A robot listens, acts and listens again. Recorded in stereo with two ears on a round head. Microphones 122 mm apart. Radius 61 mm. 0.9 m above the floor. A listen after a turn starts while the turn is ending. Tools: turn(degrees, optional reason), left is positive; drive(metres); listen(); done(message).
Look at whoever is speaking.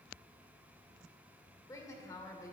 turn(degrees=25, reason="The woman speaking: about 25° left or 155° left.")
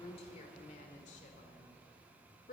turn(degrees=115, reason="So it is at 115° left.")
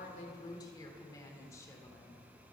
turn(degrees=20, reason="The woman speaking is now 20° left.")
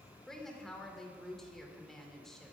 done("Facing the woman speaking.")